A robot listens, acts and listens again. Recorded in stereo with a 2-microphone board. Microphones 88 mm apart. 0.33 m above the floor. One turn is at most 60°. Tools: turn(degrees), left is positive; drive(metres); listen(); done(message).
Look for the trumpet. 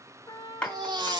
turn(degrees=50)
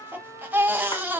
turn(degrees=60)
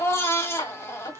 turn(degrees=15)
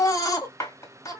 done("Facing the trumpet, 1 to 2 m away.")